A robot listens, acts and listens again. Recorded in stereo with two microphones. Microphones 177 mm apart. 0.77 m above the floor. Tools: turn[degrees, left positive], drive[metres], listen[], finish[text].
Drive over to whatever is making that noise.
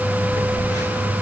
Thought: The phone buzzing: about 20° left or 160° left.
Action: turn[20]
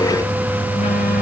Action: listen[]
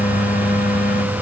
Action: listen[]
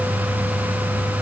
Action: finish[I heard a phone buzzing, but can't make it out now. It was about straight ahead or 140° left. I did not reach it.]